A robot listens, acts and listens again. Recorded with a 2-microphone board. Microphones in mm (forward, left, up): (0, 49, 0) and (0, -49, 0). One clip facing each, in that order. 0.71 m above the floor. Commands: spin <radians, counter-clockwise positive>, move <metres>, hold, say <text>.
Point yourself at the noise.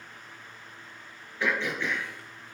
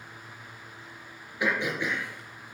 spin -0.52
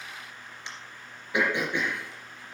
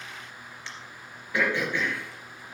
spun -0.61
spin 0.35
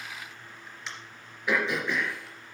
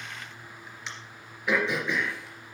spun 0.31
say Facing the throat clearing, 2 to 4 m away.